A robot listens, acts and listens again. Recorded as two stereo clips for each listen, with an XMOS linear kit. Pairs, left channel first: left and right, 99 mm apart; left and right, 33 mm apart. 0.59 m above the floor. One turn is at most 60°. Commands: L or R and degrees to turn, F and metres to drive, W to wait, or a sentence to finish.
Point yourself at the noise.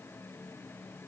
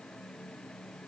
W
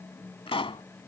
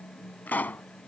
L60
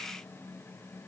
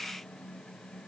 W
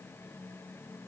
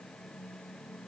I heard a pop, but can't make it out now. It was about 5° left or 55° left.